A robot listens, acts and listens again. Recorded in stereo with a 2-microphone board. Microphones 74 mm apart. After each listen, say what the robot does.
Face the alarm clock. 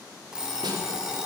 Turn 30° right.
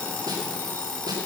Turn 20° left.
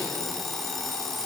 Facing the alarm clock.